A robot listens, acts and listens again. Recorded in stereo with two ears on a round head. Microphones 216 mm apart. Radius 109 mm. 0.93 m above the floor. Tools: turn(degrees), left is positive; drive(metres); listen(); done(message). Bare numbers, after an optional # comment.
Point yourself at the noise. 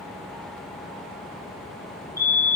turn(30)
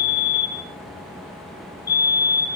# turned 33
# So it is at 135° left.
turn(135)
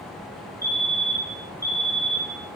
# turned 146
# The fire alarm is now 15° right.
turn(-15)
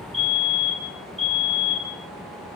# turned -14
done("Facing the fire alarm, 2 to 4 m away.")